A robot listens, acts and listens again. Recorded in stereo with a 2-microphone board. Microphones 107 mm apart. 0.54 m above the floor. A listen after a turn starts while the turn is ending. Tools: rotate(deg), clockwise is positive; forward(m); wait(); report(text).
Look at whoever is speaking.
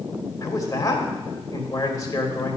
rotate(-35)
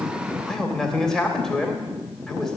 report("Facing the man speaking, 2 to 4 m away.")